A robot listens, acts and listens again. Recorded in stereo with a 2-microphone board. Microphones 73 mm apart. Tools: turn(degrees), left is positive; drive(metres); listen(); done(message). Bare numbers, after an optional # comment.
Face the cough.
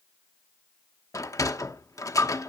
listen()
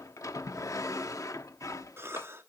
# The cough: about 35° right or 145° right.
turn(-35)
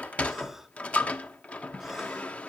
listen()
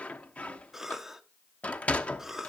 done("Facing the cough, 1 to 2 m away.")